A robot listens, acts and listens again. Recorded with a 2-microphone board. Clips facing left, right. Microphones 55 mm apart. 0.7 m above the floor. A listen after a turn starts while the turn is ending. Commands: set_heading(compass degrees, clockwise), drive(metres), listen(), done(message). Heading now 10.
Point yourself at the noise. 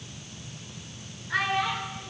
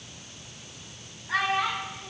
set_heading(60)
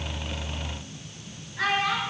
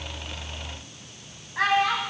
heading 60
set_heading(145)
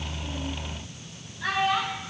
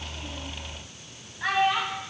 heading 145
set_heading(170)
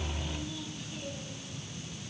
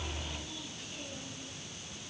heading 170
listen()
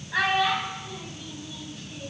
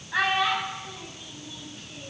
done("Found it: a child speaking, straight ahead.")